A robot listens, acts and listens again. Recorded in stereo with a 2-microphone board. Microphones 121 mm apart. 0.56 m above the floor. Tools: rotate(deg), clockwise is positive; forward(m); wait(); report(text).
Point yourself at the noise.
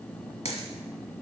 rotate(-60)
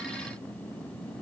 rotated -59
wait()
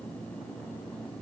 report("I heard a dropped coin, but can't make it out now. It was about 5° left or 60° left.")